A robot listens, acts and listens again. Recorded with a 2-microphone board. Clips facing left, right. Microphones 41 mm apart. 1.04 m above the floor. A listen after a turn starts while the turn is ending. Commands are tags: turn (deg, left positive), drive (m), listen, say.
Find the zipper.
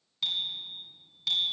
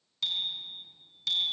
<listen/>
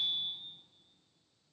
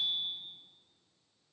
<turn deg="-30"/>
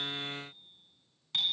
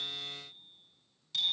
<turn deg="-145"/>
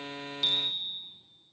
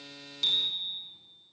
<listen/>
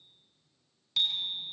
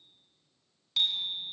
<listen/>
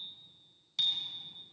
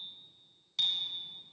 <say>Facing where the zipper came from. I can't hear it now.</say>